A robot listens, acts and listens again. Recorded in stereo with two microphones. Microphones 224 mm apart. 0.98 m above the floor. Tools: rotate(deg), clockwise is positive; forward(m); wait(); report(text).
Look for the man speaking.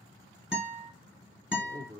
rotate(45)
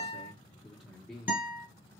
report("Facing the man speaking, 1 to 2 m away.")